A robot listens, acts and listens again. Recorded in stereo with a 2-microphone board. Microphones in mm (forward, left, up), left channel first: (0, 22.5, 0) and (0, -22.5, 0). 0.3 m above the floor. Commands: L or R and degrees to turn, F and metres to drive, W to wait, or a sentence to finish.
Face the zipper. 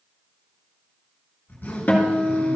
L45
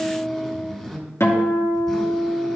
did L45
L10
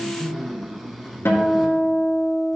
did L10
Found it: a zipper, straight ahead.